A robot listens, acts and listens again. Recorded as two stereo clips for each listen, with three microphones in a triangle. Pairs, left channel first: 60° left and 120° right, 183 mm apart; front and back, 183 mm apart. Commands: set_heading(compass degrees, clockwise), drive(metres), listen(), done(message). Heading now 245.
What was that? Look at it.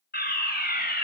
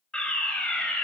set_heading(160)
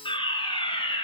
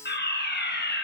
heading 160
done("Found it: a fire alarm, straight ahead, over 4 m away.")